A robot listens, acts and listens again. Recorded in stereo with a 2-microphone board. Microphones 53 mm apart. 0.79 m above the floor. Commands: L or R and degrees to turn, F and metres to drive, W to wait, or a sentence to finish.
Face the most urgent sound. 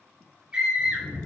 R30
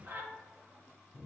R130
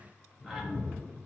W
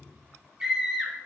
R10
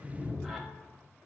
W
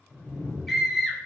Found it: a scream, straight ahead.